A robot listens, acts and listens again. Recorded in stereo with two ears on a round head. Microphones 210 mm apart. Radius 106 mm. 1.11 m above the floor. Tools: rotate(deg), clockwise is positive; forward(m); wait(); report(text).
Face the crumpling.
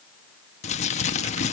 rotate(-30)
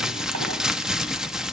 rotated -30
report("Found it: crumpling, straight ahead.")